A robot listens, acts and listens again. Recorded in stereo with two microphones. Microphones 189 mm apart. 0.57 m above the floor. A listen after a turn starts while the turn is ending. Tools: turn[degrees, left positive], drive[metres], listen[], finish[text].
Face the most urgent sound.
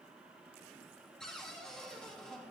Action: listen[]
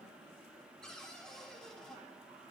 Action: listen[]
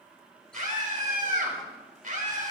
Thought: The scream: about 45° right or 135° right.
Action: turn[-45]
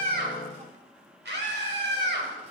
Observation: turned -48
Thought: So it is at 85° right.
Action: turn[-85]
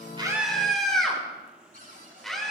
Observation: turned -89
Action: finish[Found it: a scream, straight ahead, over 4 m away.]